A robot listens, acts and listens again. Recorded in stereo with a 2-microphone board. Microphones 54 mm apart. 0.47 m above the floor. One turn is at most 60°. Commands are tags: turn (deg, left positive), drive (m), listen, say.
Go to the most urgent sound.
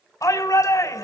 <turn deg="60"/>
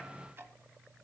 <listen/>
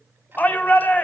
<turn deg="35"/>
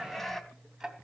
<drive m="1.0"/>
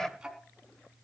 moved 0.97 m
<turn deg="10"/>
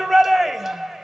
<drive m="1.0"/>
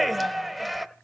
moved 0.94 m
<drive m="1.0"/>
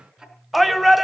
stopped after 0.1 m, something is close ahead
<say>I am next to the shout.</say>